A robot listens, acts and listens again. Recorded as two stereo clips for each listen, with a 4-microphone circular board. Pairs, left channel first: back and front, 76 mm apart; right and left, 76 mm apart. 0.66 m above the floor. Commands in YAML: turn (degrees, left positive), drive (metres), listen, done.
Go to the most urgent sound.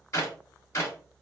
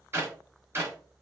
listen: true
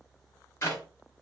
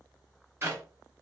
listen: true
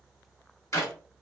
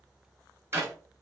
done: "I can't make out anything urgent to turn to."